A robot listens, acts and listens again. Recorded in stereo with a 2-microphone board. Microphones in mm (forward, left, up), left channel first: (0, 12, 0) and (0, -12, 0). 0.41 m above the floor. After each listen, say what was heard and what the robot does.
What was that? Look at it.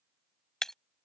The breaking glass: about 15° left or 165° left. Turn 15° left.
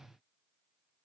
Keep listening.
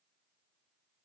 I heard breaking glass, but can't make it out now. It was about straight ahead or 150° left.